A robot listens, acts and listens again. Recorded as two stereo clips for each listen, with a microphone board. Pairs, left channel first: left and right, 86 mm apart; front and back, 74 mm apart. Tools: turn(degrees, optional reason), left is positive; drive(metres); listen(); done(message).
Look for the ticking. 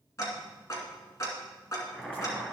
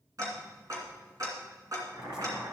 turn(degrees=140, reason="The ticking: 140° left.")
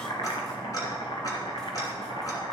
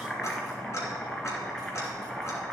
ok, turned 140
turn(degrees=45, reason="The ticking is now 45° left.")
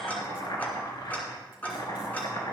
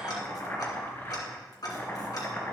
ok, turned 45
turn(degrees=20, reason="The ticking is now 20° left.")
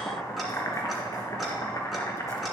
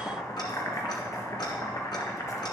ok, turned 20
listen()
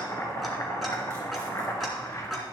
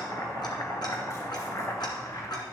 done("Found it: ticking, straight ahead, 2 to 4 m away.")